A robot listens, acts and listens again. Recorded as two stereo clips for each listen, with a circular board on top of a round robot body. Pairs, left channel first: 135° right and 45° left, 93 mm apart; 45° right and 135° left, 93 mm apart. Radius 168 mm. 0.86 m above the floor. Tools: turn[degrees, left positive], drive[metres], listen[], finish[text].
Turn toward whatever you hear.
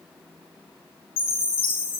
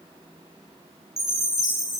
Thought: The chime: 140° right.
Action: turn[-140]
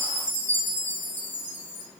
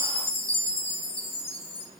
Thought: The chime is now 65° right.
Action: turn[-65]
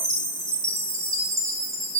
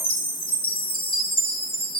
Thought: The chime is now 15° right.
Action: turn[-15]
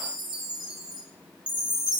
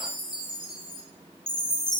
Action: finish[Found it: a chime, straight ahead.]